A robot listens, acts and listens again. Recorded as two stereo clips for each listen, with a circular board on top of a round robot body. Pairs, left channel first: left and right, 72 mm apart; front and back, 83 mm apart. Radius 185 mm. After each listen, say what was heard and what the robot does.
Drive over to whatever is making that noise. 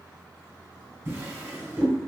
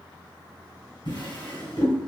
The drawer: 35° right. Turn 35° right.
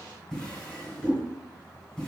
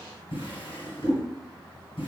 The drawer is now 10° left. Turn 10° left.
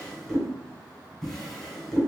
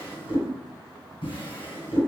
Drive 1.0 m forward.
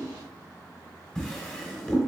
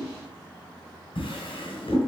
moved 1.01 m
Drive 1.0 m forward.
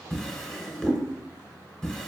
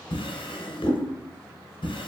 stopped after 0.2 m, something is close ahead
Arrived at the drawer, straight ahead.